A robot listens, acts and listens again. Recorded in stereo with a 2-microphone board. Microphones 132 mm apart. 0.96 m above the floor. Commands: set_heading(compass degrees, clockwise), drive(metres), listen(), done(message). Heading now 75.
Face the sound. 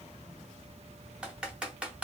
set_heading(105)
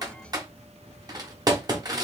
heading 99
set_heading(244)
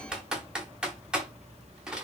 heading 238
done("Facing the typing on a keyboard, 1 to 2 m away.")